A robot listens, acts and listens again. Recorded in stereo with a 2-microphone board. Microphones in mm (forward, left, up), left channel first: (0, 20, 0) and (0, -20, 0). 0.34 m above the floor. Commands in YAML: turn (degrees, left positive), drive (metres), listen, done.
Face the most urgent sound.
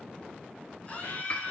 turn: 30
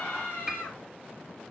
turn: 115
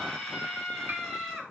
done: "Found it: a scream, straight ahead."